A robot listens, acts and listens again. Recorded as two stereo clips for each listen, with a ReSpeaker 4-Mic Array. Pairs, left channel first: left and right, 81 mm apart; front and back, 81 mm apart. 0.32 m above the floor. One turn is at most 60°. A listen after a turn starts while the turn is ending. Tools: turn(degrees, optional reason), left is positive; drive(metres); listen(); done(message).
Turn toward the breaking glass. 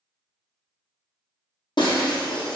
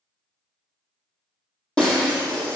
turn(degrees=60, reason="The breaking glass: 75° left.")
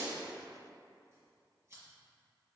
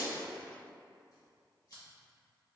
turn(degrees=15, reason="Nothing new. It was at 15° left.")
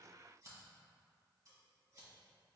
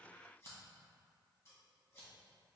done("Facing where the breaking glass came from. I can't hear it now.")